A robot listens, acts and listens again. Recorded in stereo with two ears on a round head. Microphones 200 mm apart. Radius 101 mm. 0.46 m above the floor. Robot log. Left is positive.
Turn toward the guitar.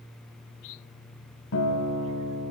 note: The guitar: about 65° left or 115° left.
cmd yaw +65
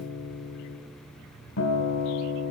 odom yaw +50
note: So it is at 60° left.
cmd yaw +60
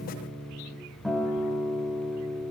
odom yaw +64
end: Facing the guitar, 2 to 4 m away.